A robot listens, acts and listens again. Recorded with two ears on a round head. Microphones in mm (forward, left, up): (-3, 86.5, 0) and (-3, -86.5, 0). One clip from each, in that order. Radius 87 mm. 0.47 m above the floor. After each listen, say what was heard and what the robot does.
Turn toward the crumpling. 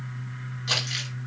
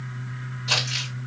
The crumpling: about 60° left or 120° left. Turn 60° left.
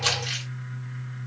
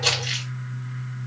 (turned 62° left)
So it is at 40° left. Turn 40° left.
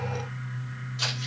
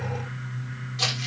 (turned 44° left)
Facing the crumpling, 2 to 4 m away.